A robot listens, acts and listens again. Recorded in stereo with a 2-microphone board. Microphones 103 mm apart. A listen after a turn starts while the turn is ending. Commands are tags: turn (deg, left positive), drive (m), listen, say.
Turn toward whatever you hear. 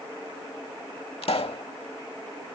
<turn deg="70"/>
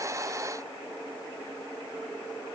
<listen/>
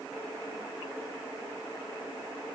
<say>I heard a pop, but can't make it out now. It was about straight ahead or 40° left.</say>